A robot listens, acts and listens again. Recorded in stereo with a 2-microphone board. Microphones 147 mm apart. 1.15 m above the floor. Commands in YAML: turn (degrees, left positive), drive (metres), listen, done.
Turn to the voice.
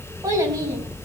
turn: -25
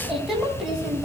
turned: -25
done: "Found it: a child speaking, straight ahead."